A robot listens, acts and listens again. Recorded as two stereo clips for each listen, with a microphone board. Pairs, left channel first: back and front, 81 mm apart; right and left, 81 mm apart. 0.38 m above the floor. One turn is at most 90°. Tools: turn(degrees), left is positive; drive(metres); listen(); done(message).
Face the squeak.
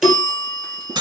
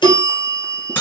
listen()
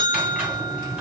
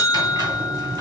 turn(degrees=75)
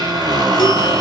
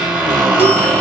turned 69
done("Facing the squeak, 1 to 2 m away.")